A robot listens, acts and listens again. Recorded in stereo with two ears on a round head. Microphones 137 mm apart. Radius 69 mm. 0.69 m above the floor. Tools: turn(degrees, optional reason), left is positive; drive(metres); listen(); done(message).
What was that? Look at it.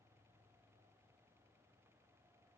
listen()
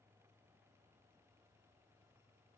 listen()
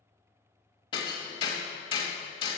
turn(degrees=35, reason="The hammering: about 35° left or 145° left.")
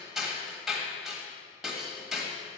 done("Found it: hammering, straight ahead, 1 to 2 m away.")